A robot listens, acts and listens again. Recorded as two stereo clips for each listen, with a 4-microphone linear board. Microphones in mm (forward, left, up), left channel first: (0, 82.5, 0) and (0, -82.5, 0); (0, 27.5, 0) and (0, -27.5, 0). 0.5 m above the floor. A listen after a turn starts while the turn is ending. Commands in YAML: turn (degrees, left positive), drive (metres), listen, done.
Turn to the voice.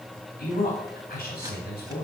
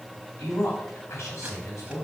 turn: 70
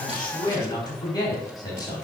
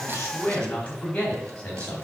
turn: 25
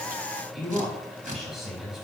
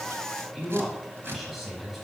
done: "Facing the man speaking, 2 to 4 m away."